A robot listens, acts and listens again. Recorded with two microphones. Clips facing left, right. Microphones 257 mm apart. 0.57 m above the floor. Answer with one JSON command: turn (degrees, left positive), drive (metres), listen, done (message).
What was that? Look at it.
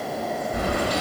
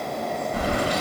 {"turn": 45}
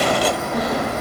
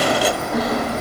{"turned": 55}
{"done": "Facing the keys jangling, 1 to 2 m away."}